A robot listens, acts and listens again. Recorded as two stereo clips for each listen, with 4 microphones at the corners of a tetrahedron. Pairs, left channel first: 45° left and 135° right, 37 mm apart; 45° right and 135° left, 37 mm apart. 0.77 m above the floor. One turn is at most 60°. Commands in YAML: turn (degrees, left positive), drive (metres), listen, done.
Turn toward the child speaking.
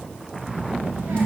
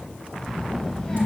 turn: -60
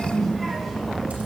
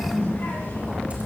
turn: -45
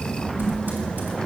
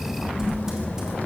turn: -20
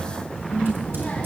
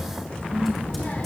done: "Found it: a child speaking, straight ahead, 1 to 2 m away."